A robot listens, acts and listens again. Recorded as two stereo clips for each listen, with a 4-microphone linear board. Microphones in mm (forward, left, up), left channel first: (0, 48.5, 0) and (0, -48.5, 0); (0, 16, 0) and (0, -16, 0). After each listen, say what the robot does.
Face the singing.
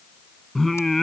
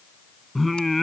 Turn 30° left.
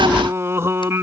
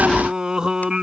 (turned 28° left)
Turn 25° right.
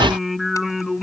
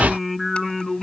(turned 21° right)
Found it: singing, straight ahead.